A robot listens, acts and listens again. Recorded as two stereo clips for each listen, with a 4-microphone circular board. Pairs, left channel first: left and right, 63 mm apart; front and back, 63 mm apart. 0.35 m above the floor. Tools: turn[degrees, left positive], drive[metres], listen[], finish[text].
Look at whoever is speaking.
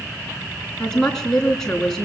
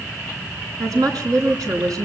Thought: The woman speaking: 170° left.
Action: turn[170]
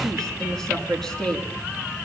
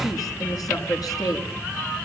Thought: The woman speaking is now 10° left.
Action: turn[10]
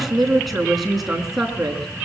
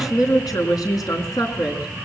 Action: finish[Found it: a woman speaking, straight ahead.]